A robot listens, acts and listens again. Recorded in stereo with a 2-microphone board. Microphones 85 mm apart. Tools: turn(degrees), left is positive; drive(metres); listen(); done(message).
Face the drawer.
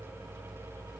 listen()
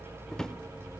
turn(degrees=30)
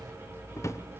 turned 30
turn(degrees=145)
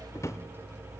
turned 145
turn(degrees=40)
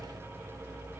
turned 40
listen()
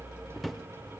done("Found it: a drawer, straight ahead, 1 to 2 m away.")